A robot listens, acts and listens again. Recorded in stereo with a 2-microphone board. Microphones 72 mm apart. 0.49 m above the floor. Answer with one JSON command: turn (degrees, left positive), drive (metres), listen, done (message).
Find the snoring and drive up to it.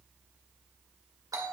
{"listen": true}
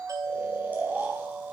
{"turn": -25}
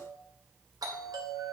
{"listen": true}
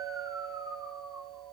{"turn": -125}
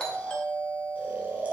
{"turn": -25}
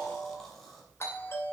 {"listen": true}
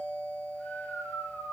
{"drive": 1.0}
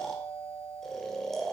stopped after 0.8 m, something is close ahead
{"done": "Arrived at the snoring, straight ahead."}